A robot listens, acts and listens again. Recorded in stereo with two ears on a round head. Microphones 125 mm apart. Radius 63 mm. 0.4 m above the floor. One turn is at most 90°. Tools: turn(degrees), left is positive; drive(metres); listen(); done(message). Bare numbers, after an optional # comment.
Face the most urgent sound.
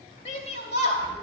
# The shout: about 55° left or 125° left.
turn(55)
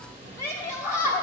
# So it is at 25° left.
turn(25)
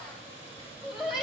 done("Found it: a shout, straight ahead, 2 to 4 m away.")